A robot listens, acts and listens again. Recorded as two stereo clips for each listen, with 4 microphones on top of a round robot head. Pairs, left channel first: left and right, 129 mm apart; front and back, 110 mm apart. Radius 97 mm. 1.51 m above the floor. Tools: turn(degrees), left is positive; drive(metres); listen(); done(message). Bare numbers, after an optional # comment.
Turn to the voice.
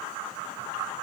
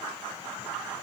listen()
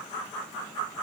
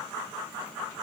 listen()
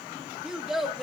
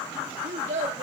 # The child speaking: straight behind.
turn(180)
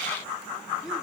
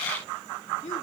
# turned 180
done("Facing the child speaking.")